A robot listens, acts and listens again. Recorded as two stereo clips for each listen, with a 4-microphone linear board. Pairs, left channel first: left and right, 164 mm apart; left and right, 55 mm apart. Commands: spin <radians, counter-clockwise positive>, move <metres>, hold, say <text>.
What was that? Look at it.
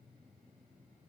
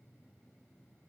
hold
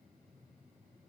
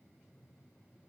hold
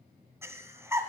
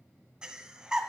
spin -0.26
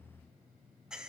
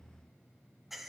say Found it: breathing, straight ahead.